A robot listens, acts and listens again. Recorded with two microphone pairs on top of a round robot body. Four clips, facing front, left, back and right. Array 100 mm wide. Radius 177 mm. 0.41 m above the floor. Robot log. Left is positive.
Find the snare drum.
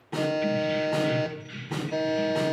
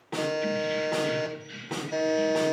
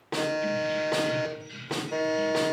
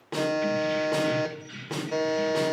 note: The snare drum: 160° right.
cmd yaw -160
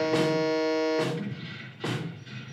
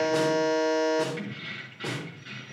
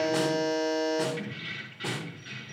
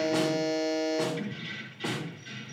end: Found it: a snare drum, straight ahead, 2 to 4 m away.